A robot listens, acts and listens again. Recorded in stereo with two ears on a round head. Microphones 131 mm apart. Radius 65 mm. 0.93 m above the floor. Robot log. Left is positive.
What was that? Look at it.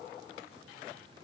cmd idle
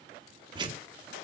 note: The tearing paper: about 30° right or 150° right.
cmd yaw -30
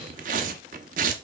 note: So it is at 120° right.
cmd yaw -120
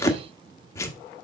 note: The tearing paper is now 20° left.
cmd yaw +20
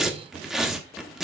end: Facing the tearing paper, 1 to 2 m away.